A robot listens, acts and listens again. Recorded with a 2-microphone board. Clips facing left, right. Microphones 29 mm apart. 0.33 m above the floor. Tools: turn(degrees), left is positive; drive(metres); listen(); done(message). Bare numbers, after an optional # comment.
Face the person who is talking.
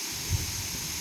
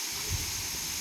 # The child speaking: about 65° right or 115° right.
turn(-65)
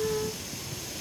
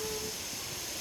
done("Facing the child speaking.")